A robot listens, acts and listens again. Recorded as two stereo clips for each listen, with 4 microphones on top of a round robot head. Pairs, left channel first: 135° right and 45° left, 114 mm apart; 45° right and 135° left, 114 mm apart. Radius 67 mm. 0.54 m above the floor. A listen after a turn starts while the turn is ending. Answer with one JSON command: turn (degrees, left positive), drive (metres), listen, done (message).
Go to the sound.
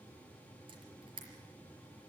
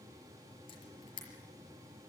{"drive": 1.0}
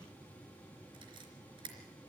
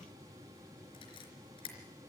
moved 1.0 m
{"drive": 1.0}
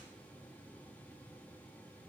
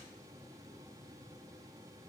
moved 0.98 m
{"listen": true}
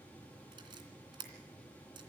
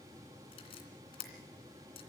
{"drive": 1.0}
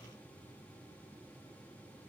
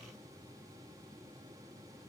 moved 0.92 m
{"listen": true}
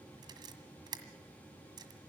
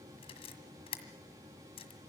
{"turn": -10}
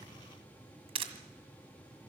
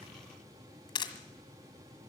{"drive": 1.0}
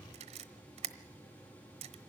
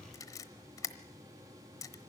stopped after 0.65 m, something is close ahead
{"turn": 15}
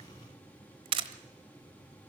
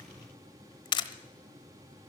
{"done": "I am next to the camera shutter."}